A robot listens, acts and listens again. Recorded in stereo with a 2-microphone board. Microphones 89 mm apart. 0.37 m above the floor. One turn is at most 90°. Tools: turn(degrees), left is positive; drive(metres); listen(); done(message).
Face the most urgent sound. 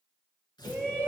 turn(degrees=30)
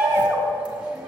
turn(degrees=-15)
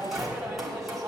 done("Facing the shout, 1 to 2 m away.")